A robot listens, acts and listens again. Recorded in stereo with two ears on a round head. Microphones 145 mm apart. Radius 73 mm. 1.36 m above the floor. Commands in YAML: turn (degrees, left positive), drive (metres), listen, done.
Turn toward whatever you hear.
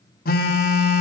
turn: 60
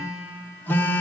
turn: 15
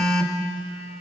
done: "Facing the phone buzzing, under 1 m away."